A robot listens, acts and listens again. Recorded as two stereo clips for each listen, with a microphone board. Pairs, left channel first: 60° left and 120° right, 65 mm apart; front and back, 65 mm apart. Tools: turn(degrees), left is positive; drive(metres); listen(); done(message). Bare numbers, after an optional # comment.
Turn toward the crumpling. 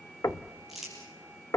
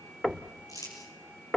# The crumpling: 35° right.
turn(-35)
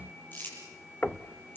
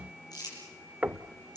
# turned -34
done("Found it: crumpling, straight ahead.")